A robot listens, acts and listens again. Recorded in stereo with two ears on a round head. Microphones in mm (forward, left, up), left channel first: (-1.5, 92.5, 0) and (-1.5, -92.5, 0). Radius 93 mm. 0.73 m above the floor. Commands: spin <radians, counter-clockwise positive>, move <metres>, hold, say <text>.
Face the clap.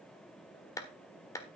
spin 0.26
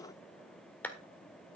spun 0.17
spin 0.52
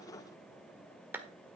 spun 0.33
spin -0.17
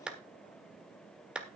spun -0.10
say Facing the clap, 1 to 2 m away.